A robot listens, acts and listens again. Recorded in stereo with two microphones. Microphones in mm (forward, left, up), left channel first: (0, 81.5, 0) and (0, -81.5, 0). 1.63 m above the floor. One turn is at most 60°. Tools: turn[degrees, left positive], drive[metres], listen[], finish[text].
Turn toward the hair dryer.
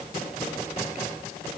Action: listen[]
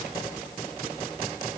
Action: listen[]
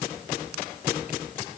Action: finish[I can't make out a hair dryer to turn to.]